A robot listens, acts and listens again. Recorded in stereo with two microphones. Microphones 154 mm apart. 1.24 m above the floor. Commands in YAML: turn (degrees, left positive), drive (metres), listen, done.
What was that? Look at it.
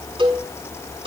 turn: -35
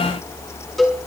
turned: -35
done: "Found it: a cowbell, straight ahead, over 4 m away."